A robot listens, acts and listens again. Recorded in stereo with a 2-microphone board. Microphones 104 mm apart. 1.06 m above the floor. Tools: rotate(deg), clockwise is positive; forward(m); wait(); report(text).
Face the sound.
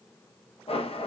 rotate(-70)
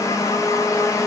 rotate(-35)
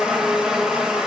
rotate(10)
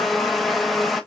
report("Facing the blender.")